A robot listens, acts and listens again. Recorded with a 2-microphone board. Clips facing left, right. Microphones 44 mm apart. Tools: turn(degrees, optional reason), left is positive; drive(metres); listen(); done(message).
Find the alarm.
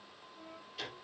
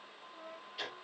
listen()
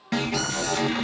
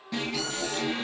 turn(degrees=70, reason="The alarm: about 70° left or 110° left.")
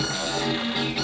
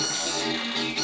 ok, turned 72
turn(degrees=10, reason="So it is at 10° left.")
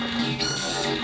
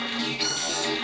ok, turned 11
done("Facing the alarm, 2 to 4 m away.")